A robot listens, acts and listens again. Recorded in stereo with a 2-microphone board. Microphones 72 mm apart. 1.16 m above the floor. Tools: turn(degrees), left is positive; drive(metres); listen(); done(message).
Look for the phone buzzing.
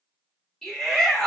listen()
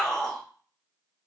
listen()
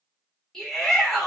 done("I can't make out a phone buzzing, only a shout.")